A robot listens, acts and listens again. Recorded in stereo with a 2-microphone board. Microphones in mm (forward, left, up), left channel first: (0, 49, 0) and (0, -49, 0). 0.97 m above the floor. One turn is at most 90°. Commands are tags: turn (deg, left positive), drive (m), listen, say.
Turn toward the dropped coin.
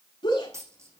<turn deg="-30"/>
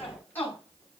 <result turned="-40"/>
<listen/>
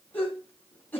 <say>I heard a dropped coin, but can't make it out now. It was about 10° left or 110° right.</say>